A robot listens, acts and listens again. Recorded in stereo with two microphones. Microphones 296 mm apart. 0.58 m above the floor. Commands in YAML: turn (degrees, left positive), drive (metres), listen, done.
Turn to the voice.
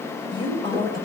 turn: 30
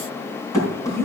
turn: 140
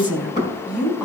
done: "Found it: a woman speaking, straight ahead, over 4 m away."